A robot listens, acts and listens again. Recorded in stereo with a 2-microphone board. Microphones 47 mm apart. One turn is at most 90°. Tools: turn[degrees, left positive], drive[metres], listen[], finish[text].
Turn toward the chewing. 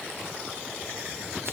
Action: listen[]
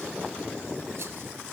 Action: listen[]
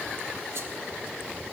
Action: finish[I can't make out chewing to turn to.]